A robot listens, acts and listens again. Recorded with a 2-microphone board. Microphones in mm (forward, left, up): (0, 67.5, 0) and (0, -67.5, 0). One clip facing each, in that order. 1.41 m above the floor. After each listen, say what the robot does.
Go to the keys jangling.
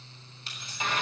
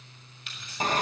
Turn 35° left.
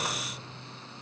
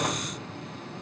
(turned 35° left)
Keep listening.
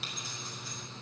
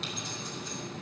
Keep listening.
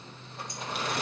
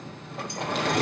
I heard keys jangling, but can't make it out now. It was about straight ahead or 110° left. I did not reach it.